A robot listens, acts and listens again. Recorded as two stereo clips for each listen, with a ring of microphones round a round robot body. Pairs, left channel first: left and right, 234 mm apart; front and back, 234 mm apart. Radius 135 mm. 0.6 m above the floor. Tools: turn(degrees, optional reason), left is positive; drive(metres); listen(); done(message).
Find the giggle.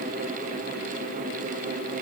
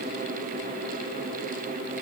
listen()
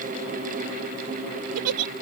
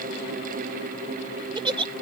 turn(degrees=-110, reason="The giggle: 110° right.")
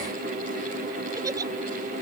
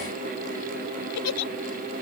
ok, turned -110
turn(degrees=-15, reason="The giggle is now 15° right.")
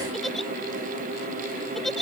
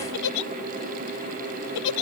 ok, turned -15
done("Found it: a giggle, straight ahead.")